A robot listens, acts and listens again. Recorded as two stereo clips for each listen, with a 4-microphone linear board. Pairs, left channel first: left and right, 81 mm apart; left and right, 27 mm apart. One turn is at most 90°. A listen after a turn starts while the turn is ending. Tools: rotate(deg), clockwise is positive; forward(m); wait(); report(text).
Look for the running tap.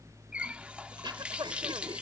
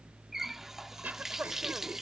rotate(30)
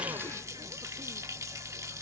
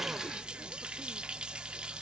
rotate(90)
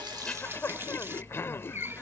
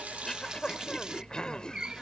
rotate(35)
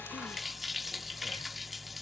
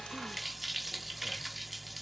report("Found it: a running tap, straight ahead.")